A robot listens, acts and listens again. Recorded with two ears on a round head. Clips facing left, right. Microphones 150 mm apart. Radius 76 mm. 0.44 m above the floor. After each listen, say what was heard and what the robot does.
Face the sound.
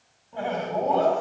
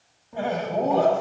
Turn 30° right.
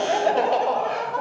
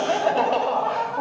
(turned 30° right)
So it is at 25° left. Turn 25° left.
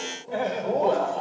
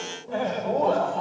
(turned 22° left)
The laughter is now 20° left. Turn 20° left.
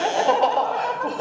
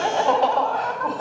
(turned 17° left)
The laughter is now 30° left. Turn 30° left.
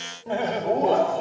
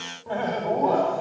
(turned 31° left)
The laughter is now 35° left. Turn 35° left.
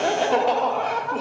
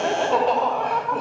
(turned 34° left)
The laughter is now 10° left. Turn 10° left.
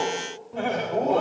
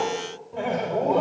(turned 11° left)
Found it: laughter, straight ahead, 1 to 2 m away.